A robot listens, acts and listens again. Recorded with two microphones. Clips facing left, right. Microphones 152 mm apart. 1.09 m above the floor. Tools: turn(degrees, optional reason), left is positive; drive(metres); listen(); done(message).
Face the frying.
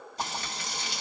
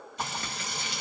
turn(degrees=35, reason="The frying: about 35° left or 145° left.")
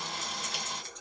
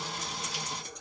turn(degrees=110, reason="So it is at 110° left.")
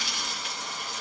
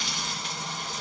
done("Found it: frying, straight ahead, 1 to 2 m away.")